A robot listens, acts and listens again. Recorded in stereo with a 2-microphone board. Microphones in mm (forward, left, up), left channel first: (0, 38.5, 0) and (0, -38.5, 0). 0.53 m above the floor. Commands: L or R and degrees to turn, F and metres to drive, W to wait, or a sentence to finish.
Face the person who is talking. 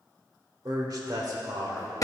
R55
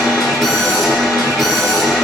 W
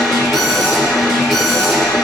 W
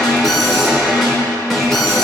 I heard a man speaking, but can't make it out now. It was about straight ahead or 70° right.